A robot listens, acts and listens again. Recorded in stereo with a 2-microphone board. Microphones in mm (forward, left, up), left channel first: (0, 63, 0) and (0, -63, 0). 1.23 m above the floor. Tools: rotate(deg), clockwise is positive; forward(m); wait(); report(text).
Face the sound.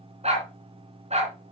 rotate(60)
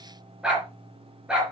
rotate(10)
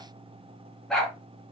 report("Found it: a dog barking, straight ahead.")